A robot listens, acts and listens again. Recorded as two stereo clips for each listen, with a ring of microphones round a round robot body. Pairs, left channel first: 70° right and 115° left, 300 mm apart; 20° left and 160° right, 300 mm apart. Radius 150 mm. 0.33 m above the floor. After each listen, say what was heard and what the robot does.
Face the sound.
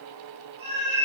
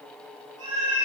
The cat meowing: 170° left. Turn 170° left.
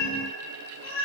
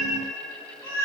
The cat meowing is now 60° right. Turn 60° right.
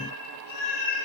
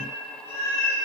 The cat meowing is now 40° right. Turn 40° right.
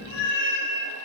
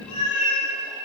The cat meowing is now 10° right. Turn 10° right.
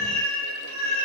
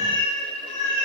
Facing the cat meowing.